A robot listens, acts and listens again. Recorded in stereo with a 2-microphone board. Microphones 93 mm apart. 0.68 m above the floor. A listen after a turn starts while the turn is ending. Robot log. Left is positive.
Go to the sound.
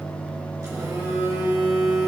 note: The phone buzzing: about 40° right or 140° right.
cmd yaw -40
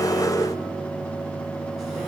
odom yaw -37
cmd idle
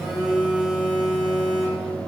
cmd fwd 1.0
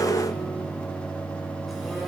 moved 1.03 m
cmd idle
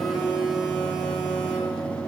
cmd fwd 1.0
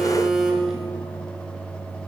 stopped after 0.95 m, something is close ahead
end: Arrived at the phone buzzing, straight ahead.